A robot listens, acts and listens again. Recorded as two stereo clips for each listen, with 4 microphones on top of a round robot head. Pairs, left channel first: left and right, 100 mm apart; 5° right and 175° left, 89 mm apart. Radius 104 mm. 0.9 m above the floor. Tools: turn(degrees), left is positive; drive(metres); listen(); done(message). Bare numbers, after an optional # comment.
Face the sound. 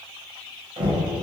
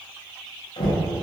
# The knocking: 45° right.
turn(-45)
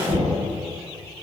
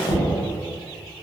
done("Found it: knocking, straight ahead, 1 to 2 m away.")